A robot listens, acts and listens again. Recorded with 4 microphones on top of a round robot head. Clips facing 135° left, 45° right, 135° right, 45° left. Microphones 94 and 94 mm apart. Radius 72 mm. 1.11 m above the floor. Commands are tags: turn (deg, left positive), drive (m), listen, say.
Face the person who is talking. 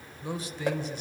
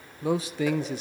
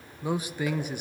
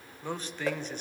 <turn deg="-55"/>
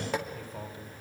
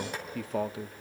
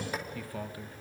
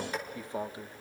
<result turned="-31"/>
<turn deg="-25"/>
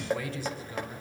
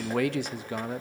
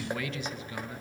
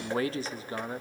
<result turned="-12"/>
<turn deg="-10"/>
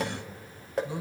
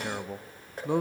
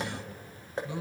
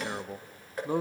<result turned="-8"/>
<say>Facing the man speaking.</say>